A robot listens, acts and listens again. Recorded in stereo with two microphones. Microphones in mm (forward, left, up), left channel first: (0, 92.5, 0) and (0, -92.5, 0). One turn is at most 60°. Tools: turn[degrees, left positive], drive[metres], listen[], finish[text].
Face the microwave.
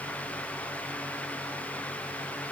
Action: listen[]
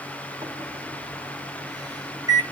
Thought: The microwave: about 20° right or 160° right.
Action: turn[-20]
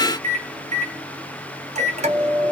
Thought: So it is at 135° right.
Action: turn[-60]
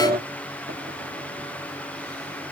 Thought: The microwave is now 75° right.
Action: turn[-60]
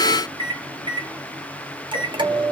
Thought: The microwave is now 30° right.
Action: turn[-30]
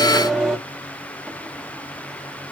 Action: finish[Facing the microwave.]